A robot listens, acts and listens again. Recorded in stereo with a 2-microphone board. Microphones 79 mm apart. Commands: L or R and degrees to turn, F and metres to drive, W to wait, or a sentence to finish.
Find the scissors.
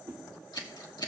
L65
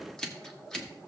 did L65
L10
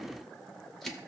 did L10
W
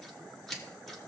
Found it: scissors, straight ahead, 1 to 2 m away.